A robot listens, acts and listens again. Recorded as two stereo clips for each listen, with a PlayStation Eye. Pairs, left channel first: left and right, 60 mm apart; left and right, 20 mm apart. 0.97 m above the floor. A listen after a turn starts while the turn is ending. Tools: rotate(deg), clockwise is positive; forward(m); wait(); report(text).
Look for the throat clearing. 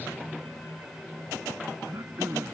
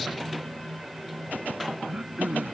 rotate(50)
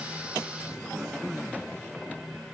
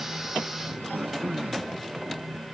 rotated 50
report("Found it: throat clearing, straight ahead.")